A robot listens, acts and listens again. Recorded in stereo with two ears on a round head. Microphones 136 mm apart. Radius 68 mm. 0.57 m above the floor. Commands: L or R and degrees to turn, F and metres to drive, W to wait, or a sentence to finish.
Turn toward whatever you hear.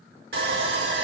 R75
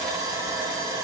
R25
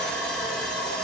Facing the sawing.